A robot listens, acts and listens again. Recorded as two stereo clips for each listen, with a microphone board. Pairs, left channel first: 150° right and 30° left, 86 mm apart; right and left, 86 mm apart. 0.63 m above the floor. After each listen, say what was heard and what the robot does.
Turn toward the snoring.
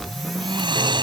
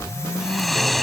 Found it: snoring, straight ahead.